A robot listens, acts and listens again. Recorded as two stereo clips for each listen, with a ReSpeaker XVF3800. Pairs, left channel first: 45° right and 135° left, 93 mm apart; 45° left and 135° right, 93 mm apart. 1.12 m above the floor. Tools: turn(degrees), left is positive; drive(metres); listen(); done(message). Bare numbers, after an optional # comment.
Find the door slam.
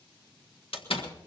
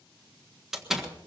# The door slam: 50° right.
turn(-50)
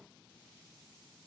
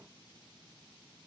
done("I heard a door slam from this way, but can't make it out now.")